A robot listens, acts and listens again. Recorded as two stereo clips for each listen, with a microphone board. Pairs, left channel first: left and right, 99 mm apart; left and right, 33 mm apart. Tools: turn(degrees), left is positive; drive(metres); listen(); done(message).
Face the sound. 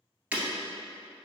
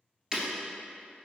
turn(degrees=-15)
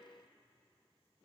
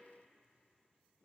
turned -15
listen()
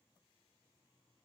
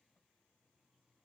done("I heard breaking glass, but can't make it out now. It was about straight ahead or 150° right.")